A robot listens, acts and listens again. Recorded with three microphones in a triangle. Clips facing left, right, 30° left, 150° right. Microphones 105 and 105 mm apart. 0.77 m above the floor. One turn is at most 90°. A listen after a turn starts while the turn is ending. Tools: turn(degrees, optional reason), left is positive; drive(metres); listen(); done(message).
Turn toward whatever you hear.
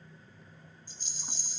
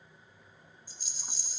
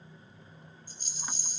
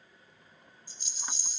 turn(degrees=-10, reason="The rattle: 10° right.")
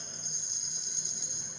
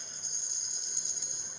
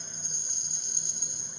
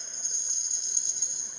done("Facing the rattle, 1 to 2 m away.")